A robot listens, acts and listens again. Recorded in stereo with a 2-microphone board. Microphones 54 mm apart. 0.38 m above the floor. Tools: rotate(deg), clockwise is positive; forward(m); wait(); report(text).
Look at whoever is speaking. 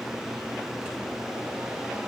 wait()
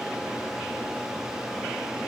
wait()
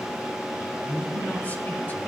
rotate(-30)
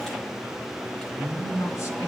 rotate(-120)
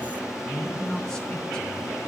rotate(-15)
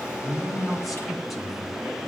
report("Found it: a man speaking, straight ahead.")